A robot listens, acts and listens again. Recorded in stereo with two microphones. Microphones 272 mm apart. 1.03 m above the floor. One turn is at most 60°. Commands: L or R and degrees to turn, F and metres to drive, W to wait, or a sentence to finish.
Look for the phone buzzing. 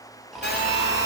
L35
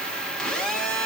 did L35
Found it: a phone buzzing, straight ahead.